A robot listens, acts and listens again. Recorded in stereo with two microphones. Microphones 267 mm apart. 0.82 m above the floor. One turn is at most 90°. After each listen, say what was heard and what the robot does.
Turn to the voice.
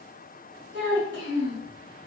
The child speaking: about 40° right or 140° right. Turn 40° right.
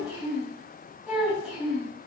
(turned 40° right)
Facing the child speaking.